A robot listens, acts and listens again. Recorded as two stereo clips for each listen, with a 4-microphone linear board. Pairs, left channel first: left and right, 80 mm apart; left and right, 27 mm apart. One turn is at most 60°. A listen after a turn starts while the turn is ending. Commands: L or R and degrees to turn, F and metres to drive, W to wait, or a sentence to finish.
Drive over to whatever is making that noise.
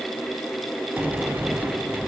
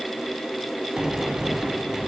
R20
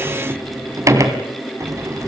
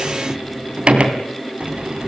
R60
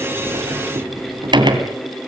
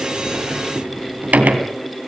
R60
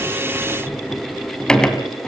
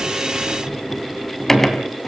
L10
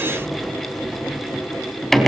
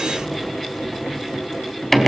F1.0
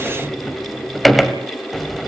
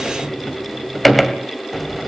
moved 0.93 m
F1.0
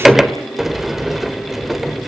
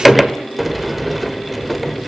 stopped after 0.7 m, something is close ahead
Arrived at the sliding door, straight ahead.